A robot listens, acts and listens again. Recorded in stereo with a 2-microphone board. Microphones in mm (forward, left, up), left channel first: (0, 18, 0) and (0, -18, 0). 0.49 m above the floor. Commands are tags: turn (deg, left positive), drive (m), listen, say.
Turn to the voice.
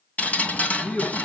<turn deg="75"/>
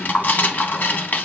<listen/>
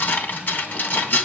<listen/>
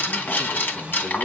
<turn deg="25"/>
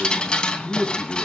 <say>Found it: a man speaking, straight ahead.</say>